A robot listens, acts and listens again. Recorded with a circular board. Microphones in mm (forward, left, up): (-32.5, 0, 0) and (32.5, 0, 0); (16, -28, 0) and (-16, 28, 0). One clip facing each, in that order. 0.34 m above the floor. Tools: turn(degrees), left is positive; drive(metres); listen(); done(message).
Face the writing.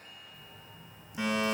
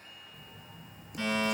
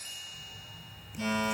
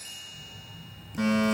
turn(degrees=25)
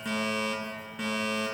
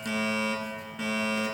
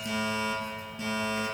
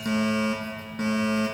listen()
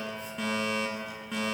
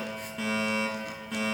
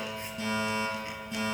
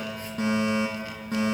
listen()
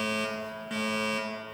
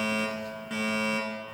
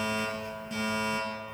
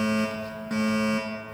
done("Facing where the writing came from. I can't hear it now.")